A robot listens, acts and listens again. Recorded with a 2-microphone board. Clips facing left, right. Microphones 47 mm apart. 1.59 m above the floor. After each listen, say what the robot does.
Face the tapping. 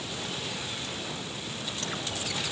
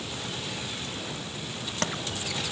Turn 90° right.
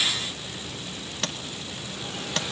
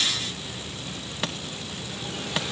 Turn 10° right.
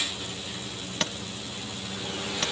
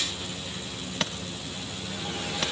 Found it: tapping, straight ahead, 1 to 2 m away.